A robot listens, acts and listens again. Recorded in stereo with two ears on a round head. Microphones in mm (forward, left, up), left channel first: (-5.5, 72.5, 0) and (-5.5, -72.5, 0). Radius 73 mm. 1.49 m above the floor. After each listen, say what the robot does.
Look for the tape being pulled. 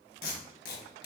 Turn 60° left.
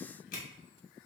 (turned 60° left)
Turn 60° left.
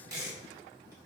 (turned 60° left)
Turn 20° right.
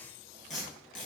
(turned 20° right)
Facing the tape being pulled.